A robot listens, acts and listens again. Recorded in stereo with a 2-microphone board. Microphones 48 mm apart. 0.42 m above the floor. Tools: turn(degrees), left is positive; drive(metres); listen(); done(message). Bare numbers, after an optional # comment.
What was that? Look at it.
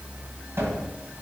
# The cupboard door: about 65° right or 115° right.
turn(-65)
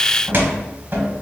# So it is at 45° right.
turn(-45)
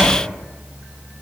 done("Found it: a cupboard door, straight ahead, 1 to 2 m away.")